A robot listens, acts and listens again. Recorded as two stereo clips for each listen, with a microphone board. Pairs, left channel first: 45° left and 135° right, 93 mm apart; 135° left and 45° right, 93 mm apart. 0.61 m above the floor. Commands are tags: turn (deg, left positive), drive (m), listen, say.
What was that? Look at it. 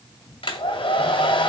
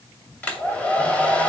<turn deg="60"/>
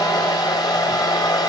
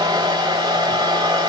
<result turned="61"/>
<say>Facing the hair dryer.</say>